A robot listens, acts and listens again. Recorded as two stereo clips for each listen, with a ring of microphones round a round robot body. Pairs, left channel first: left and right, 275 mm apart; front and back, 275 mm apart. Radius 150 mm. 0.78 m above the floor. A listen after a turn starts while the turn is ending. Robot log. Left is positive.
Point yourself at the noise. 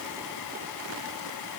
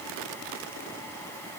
cmd idle
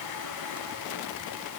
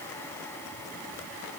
cmd idle
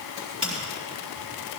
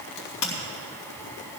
note: The crack: 15° right.
cmd yaw -15
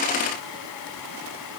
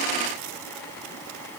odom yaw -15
end: I heard a crack from this way, but can't make it out now.